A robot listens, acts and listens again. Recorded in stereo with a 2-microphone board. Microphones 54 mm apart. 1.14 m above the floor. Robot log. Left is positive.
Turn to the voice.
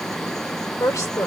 cmd yaw +90
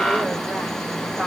cmd idle
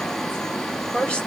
note: The woman speaking is now 15° left.
cmd yaw +15
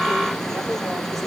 cmd idle
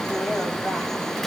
cmd idle
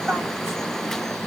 end: Facing where the woman speaking came from. I can't hear it now.